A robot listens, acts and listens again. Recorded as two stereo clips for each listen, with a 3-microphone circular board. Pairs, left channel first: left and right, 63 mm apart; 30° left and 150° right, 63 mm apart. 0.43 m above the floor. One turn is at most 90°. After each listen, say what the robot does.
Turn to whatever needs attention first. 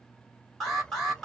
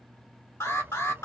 Facing the alarm.